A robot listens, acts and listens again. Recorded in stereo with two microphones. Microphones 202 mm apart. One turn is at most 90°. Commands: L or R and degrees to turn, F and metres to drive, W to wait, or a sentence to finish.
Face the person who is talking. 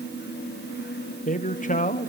L40
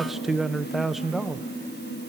Facing the man speaking.